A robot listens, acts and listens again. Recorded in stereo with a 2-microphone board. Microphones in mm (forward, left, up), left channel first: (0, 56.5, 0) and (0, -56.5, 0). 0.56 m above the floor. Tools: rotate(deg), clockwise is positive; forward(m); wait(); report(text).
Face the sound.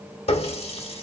rotate(-60)
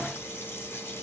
rotate(-20)
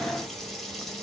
report("Facing the running tap, under 1 m away.")